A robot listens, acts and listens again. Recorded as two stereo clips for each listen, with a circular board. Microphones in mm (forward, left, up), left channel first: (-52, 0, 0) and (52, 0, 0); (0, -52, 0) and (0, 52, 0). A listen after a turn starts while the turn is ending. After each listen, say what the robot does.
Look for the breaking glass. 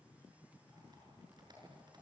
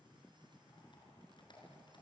Keep listening.
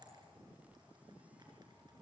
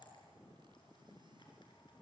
Keep listening.
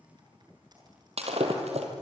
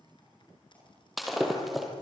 Facing the breaking glass, 2 to 4 m away.